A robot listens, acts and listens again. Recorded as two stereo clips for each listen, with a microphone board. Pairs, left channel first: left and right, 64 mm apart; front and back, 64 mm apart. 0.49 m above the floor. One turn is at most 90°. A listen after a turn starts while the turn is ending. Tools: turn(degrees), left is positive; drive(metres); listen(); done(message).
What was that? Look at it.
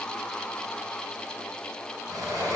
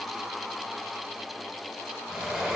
turn(degrees=-90)
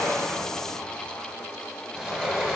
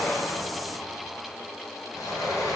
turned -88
done("Facing the sliding door, 2 to 4 m away.")